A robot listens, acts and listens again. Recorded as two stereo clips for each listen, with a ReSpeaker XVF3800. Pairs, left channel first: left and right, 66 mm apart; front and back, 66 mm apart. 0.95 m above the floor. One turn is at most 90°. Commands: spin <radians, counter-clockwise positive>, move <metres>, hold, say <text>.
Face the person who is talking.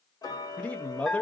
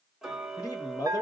spin 0.35
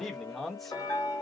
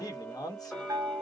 say Found it: a man speaking, straight ahead, 1 to 2 m away.